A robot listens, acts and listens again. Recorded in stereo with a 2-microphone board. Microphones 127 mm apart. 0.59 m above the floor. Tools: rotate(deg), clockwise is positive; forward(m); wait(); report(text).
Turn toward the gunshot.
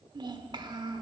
wait()
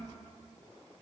wait()
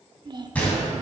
rotate(-30)
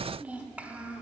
wait()
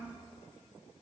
report("I heard a gunshot, but can't make it out now. It was about 20° right or 140° left.")